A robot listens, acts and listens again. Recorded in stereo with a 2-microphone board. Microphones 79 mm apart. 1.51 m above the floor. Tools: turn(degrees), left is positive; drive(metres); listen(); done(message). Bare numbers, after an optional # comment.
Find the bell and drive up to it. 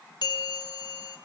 # The bell: about 65° left or 115° left.
turn(65)
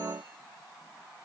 listen()
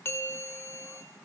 # So it is at 35° left.
turn(35)
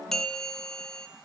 # The bell is now 10° left.
turn(10)
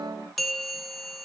drive(1.0)
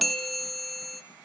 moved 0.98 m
drive(1.0)
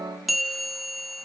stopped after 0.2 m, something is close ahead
done("I am next to the bell.")